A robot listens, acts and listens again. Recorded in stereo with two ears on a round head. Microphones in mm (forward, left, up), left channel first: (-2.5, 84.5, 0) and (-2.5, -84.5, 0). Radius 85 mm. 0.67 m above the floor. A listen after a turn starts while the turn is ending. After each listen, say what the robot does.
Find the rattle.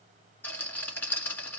Turn 30° left.
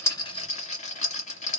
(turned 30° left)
Turn 140° left.
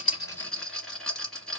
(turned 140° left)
Facing the rattle, 2 to 4 m away.